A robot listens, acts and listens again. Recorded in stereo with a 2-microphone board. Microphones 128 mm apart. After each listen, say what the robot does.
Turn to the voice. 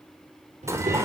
Turn 70° right.
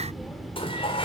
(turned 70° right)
Found it: a child speaking, straight ahead, over 4 m away.